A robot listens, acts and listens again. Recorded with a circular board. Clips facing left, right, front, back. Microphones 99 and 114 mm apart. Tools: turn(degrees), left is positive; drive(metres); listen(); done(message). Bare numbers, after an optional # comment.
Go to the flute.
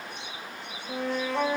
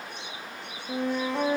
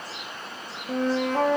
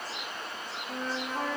# The flute: 15° right.
turn(-15)
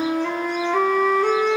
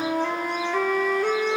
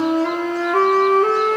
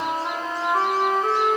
drive(1.0)
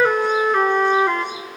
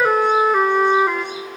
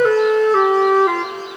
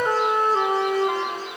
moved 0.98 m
drive(1.0)
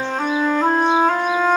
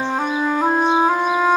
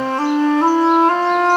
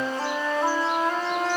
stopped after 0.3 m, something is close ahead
# The flute is now 10° right.
turn(-10)
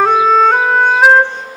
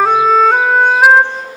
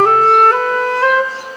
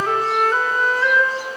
done("I am next to the flute.")